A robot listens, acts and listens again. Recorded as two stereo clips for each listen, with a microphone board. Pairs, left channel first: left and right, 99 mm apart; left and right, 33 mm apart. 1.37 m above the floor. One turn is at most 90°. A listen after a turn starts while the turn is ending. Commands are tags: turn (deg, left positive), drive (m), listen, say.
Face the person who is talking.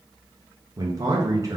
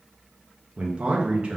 <turn deg="-35"/>
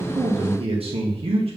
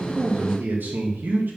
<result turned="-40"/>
<turn deg="-90"/>
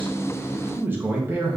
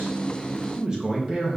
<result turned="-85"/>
<turn deg="-20"/>
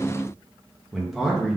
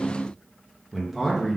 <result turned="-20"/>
<say>Facing the man speaking, 1 to 2 m away.</say>